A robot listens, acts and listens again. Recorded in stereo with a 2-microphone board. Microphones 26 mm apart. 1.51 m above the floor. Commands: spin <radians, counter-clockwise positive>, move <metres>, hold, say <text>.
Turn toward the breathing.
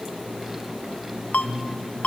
spin 0.52
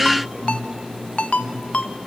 spin 2.53
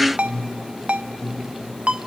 spin 0.52
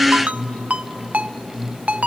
spin 0.17
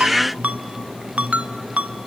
say Facing the breathing.